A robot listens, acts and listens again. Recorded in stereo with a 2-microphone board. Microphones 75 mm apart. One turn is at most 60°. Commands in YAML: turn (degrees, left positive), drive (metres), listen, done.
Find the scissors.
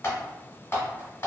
listen: true
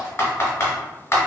listen: true
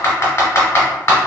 done: "I can't make out scissors to turn to."